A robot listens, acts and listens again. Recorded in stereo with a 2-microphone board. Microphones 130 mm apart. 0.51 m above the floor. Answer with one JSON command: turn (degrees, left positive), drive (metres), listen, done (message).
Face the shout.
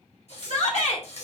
{"turn": 60}
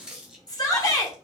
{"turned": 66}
{"turn": 35}
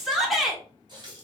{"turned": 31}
{"done": "Facing the shout."}